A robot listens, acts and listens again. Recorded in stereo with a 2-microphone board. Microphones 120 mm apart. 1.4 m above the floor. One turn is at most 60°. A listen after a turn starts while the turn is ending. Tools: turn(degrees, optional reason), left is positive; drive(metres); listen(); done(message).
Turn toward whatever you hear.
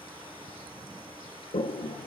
turn(degrees=60, reason="The toilet flushing: about 60° left or 120° left.")
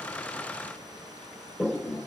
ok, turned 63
done("Found it: a toilet flushing, straight ahead.")